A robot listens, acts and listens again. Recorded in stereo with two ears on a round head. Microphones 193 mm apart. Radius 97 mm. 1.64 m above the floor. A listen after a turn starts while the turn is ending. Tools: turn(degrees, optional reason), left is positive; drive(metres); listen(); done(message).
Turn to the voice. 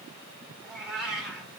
listen()
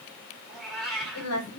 turn(degrees=90)
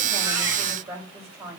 turn(degrees=-10, reason="So it is at 10° right.")
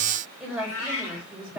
done("Found it: a woman speaking, straight ahead.")